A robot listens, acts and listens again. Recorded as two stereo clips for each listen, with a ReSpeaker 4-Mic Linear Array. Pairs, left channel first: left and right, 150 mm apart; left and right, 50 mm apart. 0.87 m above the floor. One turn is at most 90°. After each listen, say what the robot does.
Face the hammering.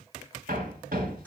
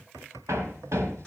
Turn 90° right.
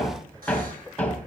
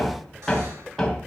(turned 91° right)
Turn 10° left.
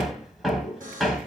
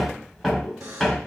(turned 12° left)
Found it: hammering, straight ahead, 2 to 4 m away.